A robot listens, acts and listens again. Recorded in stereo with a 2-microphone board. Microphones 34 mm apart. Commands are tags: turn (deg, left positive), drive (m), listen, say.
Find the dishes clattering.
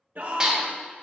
<turn deg="-25"/>
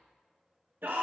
<listen/>
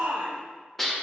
<say>Facing the dishes clattering, 1 to 2 m away.</say>